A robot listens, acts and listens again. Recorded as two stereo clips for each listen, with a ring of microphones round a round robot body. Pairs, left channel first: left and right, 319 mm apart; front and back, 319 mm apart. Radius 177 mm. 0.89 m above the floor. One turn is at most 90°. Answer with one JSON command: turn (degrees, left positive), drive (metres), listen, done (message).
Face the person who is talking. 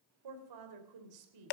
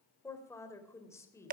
{"turn": -80}
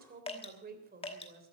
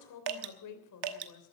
{"turn": -30}
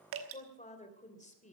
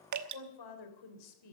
{"turn": 20}
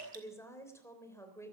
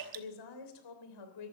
{"turn": 10}
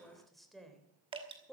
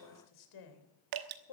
{"done": "Found it: a woman speaking, straight ahead, 2 to 4 m away."}